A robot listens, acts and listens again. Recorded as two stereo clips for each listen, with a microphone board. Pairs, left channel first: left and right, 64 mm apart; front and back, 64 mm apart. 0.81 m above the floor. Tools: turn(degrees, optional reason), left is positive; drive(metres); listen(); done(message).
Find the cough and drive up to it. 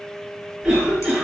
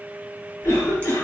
turn(degrees=-20, reason="The cough: 20° right.")
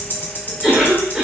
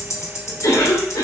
drive(metres=1.0)
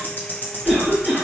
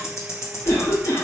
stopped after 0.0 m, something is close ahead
done("Blocked. The cough is further on, straight ahead.")